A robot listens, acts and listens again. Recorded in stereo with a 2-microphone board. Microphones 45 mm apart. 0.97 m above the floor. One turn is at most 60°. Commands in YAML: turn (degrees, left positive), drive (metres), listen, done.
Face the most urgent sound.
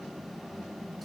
listen: true
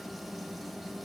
listen: true
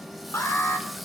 turn: 60
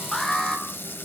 turn: 15
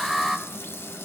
done: "Facing the alarm."